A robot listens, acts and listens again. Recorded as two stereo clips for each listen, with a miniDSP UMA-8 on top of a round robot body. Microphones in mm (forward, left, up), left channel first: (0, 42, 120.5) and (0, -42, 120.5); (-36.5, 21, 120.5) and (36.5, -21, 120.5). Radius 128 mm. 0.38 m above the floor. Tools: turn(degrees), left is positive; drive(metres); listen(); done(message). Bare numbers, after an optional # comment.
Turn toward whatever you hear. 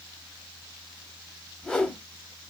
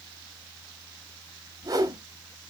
# The whoosh: 10° left.
turn(10)
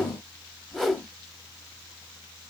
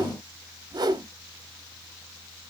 done("Facing the whoosh.")